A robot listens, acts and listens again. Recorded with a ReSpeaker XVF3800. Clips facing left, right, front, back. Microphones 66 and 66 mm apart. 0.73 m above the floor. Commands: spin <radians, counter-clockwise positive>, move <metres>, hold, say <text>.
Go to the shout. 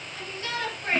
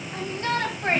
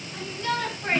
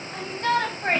spin -2.44
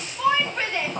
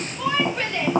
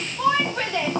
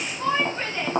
spin 0.26
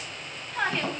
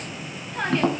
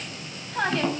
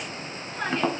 move 1.0
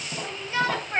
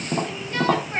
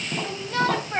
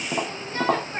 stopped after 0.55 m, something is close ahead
spin 0.17
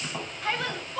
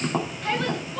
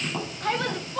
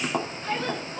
say Something is in my way. I am facing the shout but have not reached it.